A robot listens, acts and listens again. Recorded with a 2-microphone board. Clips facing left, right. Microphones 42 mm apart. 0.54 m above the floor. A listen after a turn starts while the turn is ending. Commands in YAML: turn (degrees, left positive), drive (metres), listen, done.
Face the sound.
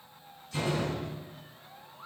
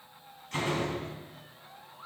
turn: -50
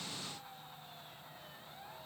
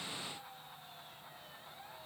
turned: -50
listen: true
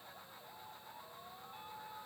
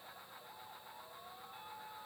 done: "I heard a door slam, but can't make it out now. It was about straight ahead or 80° right."